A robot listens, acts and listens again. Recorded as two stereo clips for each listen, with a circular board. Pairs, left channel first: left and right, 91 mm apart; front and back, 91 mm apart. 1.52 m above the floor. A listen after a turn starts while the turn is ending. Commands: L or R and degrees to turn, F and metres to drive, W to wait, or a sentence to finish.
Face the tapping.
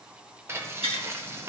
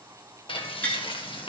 R75
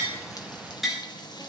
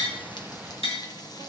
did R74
Facing the tapping, 2 to 4 m away.